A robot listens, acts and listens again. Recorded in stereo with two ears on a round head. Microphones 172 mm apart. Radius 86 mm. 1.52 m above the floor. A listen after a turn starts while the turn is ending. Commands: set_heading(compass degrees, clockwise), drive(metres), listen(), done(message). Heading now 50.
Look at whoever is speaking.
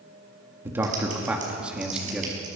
set_heading(20)
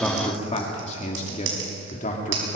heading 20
set_heading(245)
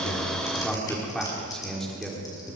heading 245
done("Facing the man speaking.")